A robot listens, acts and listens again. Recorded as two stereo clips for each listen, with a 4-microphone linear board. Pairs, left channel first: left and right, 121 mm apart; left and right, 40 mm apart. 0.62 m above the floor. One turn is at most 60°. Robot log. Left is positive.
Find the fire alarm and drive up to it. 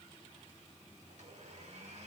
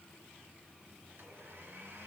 cmd idle
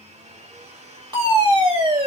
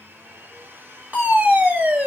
note: The fire alarm: about 40° right or 140° right.
cmd yaw -40
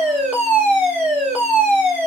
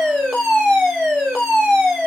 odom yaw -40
note: So it is at 10° right.
cmd yaw -10
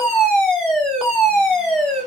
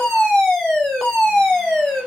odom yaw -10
cmd fwd 1.0
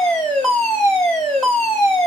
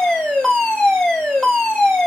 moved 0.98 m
note: The fire alarm is now 10° left.
cmd yaw +10
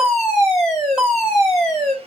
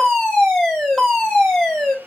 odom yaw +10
cmd fwd 1.0
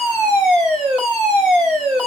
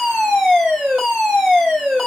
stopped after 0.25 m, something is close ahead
end: I am next to the fire alarm.